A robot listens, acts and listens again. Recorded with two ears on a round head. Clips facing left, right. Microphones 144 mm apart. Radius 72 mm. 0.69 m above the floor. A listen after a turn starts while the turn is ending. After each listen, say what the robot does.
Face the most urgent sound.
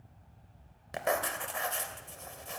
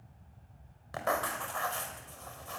Keep listening.
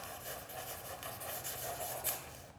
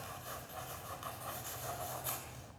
Keep listening.
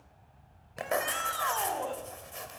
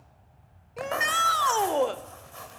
Turn 90° right.
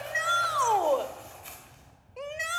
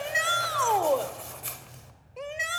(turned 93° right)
Facing the shout.